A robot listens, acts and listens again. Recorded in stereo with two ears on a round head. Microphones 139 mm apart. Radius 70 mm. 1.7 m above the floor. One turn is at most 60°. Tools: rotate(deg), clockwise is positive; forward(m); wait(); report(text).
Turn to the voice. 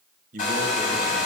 rotate(60)
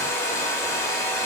wait()
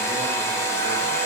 wait()
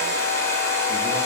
report("I heard a man speaking, but can't make it out now. It was about straight ahead or 60° right.")